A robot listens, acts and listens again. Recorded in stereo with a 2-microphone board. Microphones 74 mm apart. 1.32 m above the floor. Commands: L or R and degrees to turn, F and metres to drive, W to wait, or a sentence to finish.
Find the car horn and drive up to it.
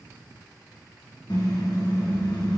L75
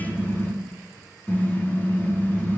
L30
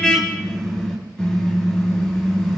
L10
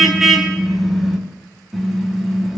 F1.0
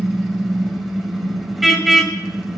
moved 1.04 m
F1.0
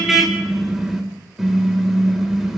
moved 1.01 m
F1.0
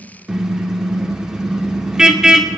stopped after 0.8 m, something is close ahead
R10
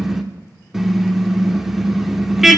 Arrived at the car horn, straight ahead.